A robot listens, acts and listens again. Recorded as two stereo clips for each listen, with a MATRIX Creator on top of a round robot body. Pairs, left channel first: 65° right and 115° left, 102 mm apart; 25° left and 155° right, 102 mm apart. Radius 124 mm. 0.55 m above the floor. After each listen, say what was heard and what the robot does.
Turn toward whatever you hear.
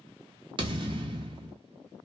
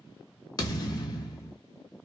The thud: 75° left. Turn 75° left.
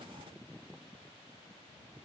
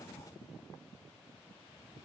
I heard a thud from this way, but can't make it out now.